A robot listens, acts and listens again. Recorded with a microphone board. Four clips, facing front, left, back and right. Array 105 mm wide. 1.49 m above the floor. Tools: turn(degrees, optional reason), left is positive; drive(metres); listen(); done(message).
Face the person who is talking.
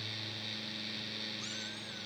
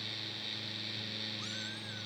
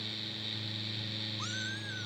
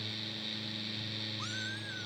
listen()
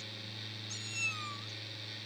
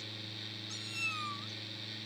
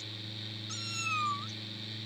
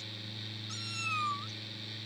listen()
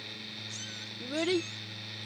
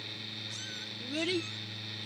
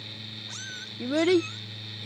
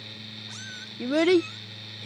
turn(degrees=-110, reason="The child speaking: 110° right.")
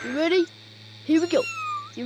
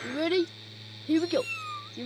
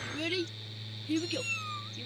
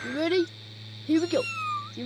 done("Facing the child speaking.")